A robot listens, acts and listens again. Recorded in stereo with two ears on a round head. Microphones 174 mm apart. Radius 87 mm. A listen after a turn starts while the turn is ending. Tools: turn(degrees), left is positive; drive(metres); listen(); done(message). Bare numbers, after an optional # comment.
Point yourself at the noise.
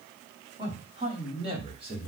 # The man speaking: about 30° right or 150° right.
turn(-30)
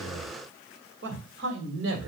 # So it is at 110° right.
turn(-110)
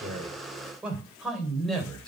done("Facing the man speaking.")